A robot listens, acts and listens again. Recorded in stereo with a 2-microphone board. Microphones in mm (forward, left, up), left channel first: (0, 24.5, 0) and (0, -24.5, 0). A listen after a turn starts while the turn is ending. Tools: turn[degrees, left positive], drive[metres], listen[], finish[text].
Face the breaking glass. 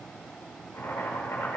Action: listen[]
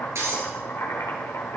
Thought: The breaking glass: about 70° right or 110° right.
Action: turn[-70]
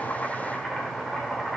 Action: listen[]
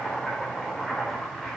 Action: finish[I heard breaking glass, but can't make it out now. It was about straight ahead or 40° right.]